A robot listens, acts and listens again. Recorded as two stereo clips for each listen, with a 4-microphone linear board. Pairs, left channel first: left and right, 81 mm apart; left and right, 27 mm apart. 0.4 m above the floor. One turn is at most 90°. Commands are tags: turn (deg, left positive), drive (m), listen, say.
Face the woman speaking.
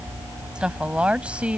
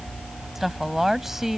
<turn deg="-30"/>
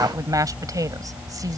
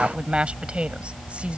<turn deg="-90"/>
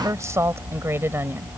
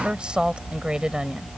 <turn deg="-30"/>
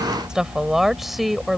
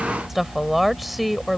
<say>Found it: a woman speaking, straight ahead.</say>